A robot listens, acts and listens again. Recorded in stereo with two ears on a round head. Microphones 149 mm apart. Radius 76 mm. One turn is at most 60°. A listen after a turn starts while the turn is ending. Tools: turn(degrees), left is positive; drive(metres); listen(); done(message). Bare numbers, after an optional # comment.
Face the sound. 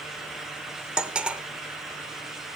turn(-30)
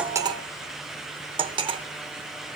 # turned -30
# So it is at 140° right.
turn(-60)
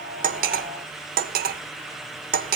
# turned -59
# The cutlery clinking is now 85° right.
turn(-60)
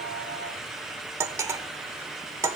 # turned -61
# The cutlery clinking is now 20° right.
turn(-20)
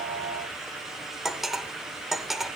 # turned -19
done("Facing the cutlery clinking.")